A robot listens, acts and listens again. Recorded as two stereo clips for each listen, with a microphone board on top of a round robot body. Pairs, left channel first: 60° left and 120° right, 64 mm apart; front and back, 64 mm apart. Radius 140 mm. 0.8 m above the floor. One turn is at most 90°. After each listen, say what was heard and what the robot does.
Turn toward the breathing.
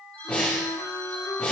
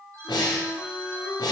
The breathing: 15° right. Turn 15° right.
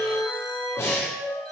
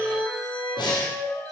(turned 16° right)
Found it: breathing, straight ahead.